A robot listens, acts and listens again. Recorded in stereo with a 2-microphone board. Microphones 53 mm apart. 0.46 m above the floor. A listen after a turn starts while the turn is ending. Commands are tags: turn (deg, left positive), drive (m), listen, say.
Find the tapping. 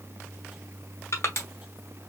<listen/>
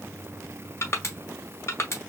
<listen/>
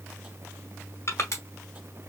<say>I can't make out tapping, only crushing.</say>